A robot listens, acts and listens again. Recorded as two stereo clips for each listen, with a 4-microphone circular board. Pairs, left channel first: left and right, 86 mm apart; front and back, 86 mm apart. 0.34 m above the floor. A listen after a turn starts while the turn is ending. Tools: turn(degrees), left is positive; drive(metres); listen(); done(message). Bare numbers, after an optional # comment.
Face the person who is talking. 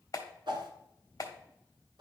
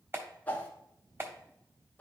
listen()
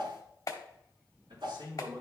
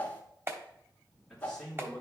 # The man speaking: 95° right.
turn(-95)
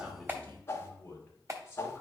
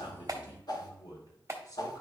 # The man speaking is now 25° left.
turn(25)
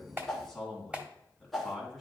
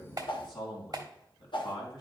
done("Found it: a man speaking, straight ahead, 2 to 4 m away.")